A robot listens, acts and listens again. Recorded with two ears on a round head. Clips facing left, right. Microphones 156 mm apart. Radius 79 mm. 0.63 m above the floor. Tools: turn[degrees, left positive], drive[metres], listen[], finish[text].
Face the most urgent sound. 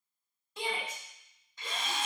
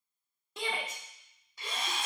Thought: The shout: about 55° right or 125° right.
Action: turn[-55]
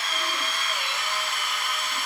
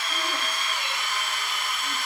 Action: listen[]
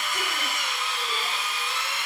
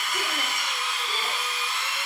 Action: listen[]
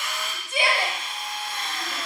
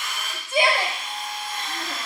Thought: So it is at 40° right.
Action: turn[-40]
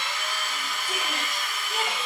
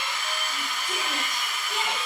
Action: listen[]
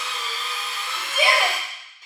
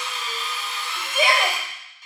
Action: finish[Facing the shout.]